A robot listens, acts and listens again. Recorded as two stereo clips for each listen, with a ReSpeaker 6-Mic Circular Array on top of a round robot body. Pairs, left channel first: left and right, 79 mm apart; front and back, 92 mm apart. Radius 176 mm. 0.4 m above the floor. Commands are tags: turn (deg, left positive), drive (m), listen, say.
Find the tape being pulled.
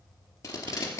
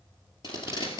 <turn deg="35"/>
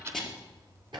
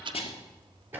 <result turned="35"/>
<say>Found it: tape being pulled, straight ahead, 2 to 4 m away.</say>